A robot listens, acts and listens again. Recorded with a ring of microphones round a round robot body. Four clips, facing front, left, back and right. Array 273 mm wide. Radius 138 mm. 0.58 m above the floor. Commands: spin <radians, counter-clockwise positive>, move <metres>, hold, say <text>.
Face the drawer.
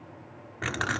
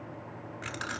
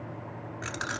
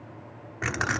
hold
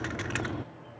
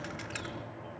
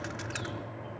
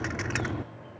hold
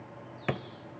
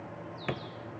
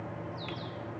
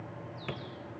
spin 0.35
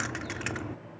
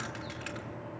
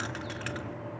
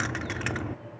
hold
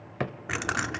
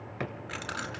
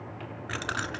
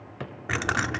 say Found it: a drawer, straight ahead.